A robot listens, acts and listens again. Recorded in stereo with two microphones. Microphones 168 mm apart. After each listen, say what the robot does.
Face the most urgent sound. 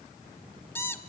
Keep listening.
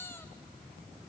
Keep listening.
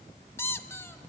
I can't make out anything urgent, only a squeak.